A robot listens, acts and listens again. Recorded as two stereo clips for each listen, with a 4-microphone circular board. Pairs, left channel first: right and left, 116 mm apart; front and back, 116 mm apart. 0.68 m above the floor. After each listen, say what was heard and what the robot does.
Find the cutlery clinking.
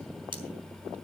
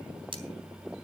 The cutlery clinking: 135° left. Turn 135° left.
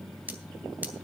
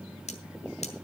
The cutlery clinking is now 15° left. Turn 15° left.
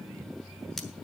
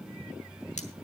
Keep listening.
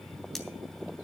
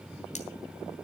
Keep listening.
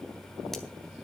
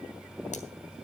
I heard cutlery clinking from this way, but can't make it out now.